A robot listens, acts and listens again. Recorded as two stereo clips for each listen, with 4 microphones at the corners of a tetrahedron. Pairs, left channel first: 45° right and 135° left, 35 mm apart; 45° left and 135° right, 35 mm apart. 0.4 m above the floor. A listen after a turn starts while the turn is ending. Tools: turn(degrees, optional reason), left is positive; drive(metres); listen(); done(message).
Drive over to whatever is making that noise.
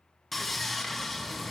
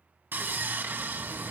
turn(degrees=-135, reason="The sawing: 135° right.")
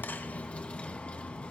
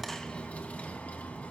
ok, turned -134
drive(metres=1.0)
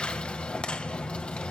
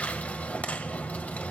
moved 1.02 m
drive(metres=1.0)
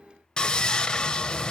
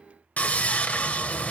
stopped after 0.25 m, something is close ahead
turn(degrees=10, reason="The sawing is now 10° left.")
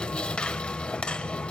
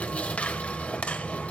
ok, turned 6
done("I am next to the sawing.")